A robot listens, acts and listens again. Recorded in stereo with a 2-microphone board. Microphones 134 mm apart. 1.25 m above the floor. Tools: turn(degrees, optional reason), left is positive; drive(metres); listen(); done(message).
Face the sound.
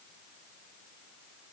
listen()
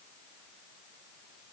listen()
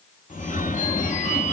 turn(degrees=70, reason="The phone ringing: about 70° left or 110° left.")
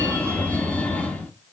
turn(degrees=10, reason="So it is at 10° left.")
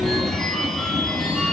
done("Facing the phone ringing, 1 to 2 m away.")